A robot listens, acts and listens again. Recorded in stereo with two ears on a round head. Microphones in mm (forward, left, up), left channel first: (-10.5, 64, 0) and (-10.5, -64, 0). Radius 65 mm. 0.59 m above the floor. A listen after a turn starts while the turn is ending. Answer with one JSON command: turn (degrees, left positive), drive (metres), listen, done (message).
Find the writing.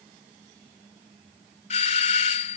{"listen": true}
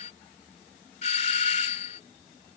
{"listen": true}
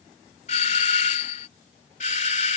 {"done": "I can't make out writing, only a doorbell."}